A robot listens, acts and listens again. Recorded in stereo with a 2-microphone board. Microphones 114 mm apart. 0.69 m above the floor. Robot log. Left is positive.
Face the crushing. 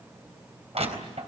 note: The crushing: about 65° right or 115° right.
cmd yaw -65
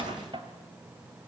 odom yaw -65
note: So it is at 50° right.
cmd yaw -50
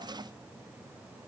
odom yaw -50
cmd idle
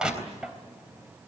end: Facing the crushing, 2 to 4 m away.